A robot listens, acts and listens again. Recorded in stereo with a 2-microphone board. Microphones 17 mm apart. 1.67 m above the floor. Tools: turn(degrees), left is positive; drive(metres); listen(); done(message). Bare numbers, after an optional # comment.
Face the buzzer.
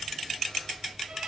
listen()
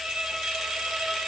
listen()
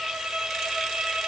done("I can't make out a buzzer to turn to.")